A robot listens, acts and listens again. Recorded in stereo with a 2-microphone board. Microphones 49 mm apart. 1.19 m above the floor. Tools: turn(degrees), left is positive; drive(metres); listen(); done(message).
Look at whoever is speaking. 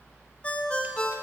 listen()
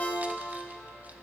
listen()
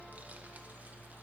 done("I can't make out anyone speaking, only a ringtone.")